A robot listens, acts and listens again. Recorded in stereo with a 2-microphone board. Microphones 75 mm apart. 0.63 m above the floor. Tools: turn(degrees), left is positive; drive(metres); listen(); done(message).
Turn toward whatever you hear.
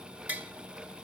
turn(degrees=-25)
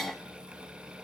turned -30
listen()
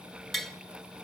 done("Facing the tapping, 1 to 2 m away.")